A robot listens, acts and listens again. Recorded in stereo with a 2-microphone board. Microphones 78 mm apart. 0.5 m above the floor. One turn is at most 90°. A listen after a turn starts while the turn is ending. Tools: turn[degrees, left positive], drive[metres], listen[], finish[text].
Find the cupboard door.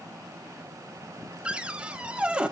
Action: turn[-30]
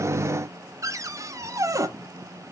Thought: So it is at 135° right.
Action: turn[-90]
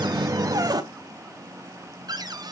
Thought: The cupboard door is now 60° right.
Action: turn[-60]
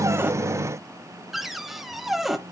Action: finish[Found it: a cupboard door, straight ahead.]